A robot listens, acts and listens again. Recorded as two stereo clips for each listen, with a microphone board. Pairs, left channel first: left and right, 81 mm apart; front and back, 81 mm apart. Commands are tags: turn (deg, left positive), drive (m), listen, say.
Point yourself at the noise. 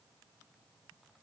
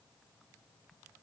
<listen/>
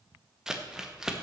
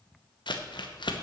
<turn deg="-10"/>
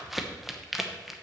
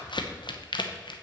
<say>Found it: crumpling, straight ahead, under 1 m away.</say>